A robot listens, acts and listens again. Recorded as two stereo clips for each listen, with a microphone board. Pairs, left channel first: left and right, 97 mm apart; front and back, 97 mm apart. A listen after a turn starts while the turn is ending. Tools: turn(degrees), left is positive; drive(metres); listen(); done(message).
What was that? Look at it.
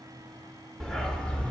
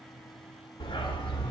turn(degrees=15)
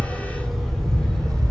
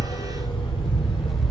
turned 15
turn(degrees=15)
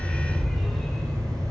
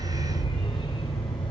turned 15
turn(degrees=15)
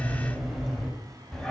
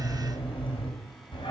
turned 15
turn(degrees=10)
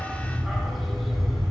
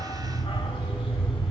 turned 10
done("Found it: a dog barking, straight ahead, 2 to 4 m away.")